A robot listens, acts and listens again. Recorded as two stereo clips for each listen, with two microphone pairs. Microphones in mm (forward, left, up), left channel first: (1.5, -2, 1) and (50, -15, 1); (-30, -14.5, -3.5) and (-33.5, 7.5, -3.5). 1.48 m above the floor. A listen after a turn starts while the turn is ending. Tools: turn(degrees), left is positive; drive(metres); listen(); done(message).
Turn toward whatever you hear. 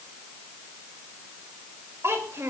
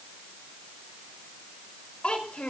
turn(degrees=-45)
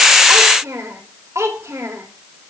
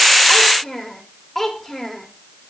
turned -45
done("Facing the child speaking.")